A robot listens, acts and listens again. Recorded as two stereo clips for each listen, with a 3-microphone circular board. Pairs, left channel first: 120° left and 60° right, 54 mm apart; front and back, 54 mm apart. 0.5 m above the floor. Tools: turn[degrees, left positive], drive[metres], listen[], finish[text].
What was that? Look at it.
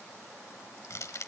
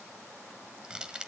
Thought: The crushing: 105° left.
Action: turn[105]
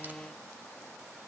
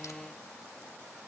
Action: listen[]
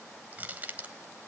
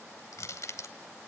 Action: finish[Found it: crushing, straight ahead, 1 to 2 m away.]